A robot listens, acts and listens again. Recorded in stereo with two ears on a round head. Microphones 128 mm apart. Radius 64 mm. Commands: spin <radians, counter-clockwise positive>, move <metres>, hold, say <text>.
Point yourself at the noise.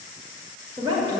spin -0.61
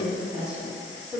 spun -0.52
spin -0.17
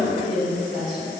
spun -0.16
say Found it: a woman speaking, straight ahead, 2 to 4 m away.